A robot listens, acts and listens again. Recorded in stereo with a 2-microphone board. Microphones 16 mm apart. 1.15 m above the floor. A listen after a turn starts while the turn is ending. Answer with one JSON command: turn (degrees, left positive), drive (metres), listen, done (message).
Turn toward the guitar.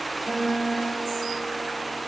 {"turn": -90}
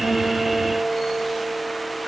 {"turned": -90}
{"turn": -10}
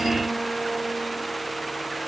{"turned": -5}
{"listen": true}
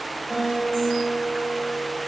{"done": "Found it: a guitar, straight ahead."}